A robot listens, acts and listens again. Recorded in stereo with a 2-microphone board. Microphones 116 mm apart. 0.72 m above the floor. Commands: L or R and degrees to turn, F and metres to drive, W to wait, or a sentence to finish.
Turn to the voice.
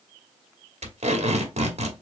W
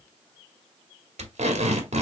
W
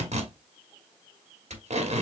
I can't make out anyone speaking, only tape being pulled.